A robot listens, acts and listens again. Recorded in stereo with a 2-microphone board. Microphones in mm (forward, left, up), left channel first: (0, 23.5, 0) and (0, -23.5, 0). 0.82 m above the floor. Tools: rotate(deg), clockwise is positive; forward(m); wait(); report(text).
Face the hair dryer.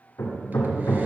wait()
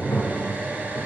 wait()
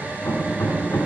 report("I can't make out a hair dryer, only hammering.")